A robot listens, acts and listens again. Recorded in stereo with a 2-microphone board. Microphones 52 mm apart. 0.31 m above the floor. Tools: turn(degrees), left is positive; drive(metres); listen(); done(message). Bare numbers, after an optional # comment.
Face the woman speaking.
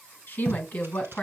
# The woman speaking: about 30° left or 150° left.
turn(30)
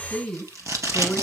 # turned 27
done("Facing the woman speaking, 2 to 4 m away.")